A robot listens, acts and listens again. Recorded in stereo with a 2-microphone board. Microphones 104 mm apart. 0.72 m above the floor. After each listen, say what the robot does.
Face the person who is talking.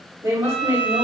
Turn 30° right.
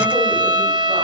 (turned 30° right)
Keep listening.
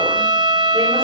Keep listening.
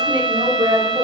Turn 120° right.
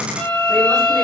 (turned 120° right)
Keep listening.
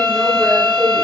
Keep listening.
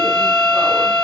Facing where the woman speaking came from. I can't hear it now.